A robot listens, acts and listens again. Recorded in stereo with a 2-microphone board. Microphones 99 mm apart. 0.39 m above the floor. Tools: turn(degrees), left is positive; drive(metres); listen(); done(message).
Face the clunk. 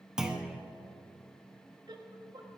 turn(degrees=-30)
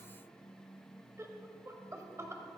listen()
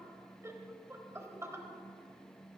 done("I heard a clunk, but can't make it out now. It was about 25° left or 145° right.")